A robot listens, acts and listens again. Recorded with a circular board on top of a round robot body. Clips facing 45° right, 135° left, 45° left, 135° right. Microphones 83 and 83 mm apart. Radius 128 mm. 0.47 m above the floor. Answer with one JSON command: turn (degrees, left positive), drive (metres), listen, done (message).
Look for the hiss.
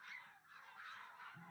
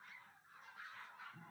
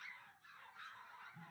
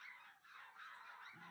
{"listen": true}
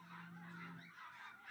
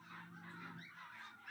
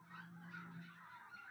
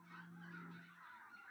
{"listen": true}
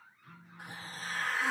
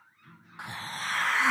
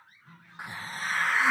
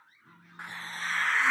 {"turn": 125}
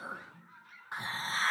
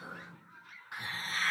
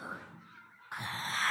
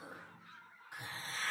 {"turn": 15}
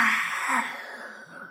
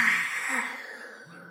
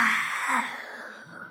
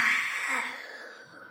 {"done": "Found it: a hiss, straight ahead."}